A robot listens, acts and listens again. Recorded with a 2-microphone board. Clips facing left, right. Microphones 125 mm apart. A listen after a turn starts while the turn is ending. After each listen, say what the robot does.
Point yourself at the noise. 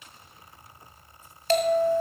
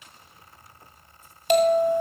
Turn 15° right.
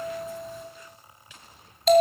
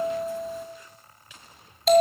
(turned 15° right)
Found it: a bell, straight ahead, 1 to 2 m away.